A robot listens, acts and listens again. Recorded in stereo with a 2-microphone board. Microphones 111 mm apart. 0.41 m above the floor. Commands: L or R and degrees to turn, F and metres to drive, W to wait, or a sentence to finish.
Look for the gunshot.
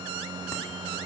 W
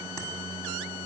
W
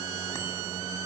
I can't make out a gunshot to turn to.